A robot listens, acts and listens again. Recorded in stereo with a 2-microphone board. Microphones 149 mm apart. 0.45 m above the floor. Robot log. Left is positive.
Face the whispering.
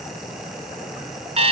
cmd idle
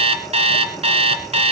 cmd idle
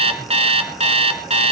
end: I can't make out whispering to turn to.